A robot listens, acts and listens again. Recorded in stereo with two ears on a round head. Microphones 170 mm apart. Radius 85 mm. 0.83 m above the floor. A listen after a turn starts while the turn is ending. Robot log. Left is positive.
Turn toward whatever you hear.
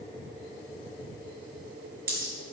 note: The dropped coin: about 50° right or 130° right.
cmd yaw -50
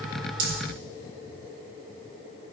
cmd idle
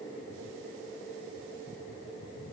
end: I heard a dropped coin, but can't make it out now. It was about straight ahead or 80° right.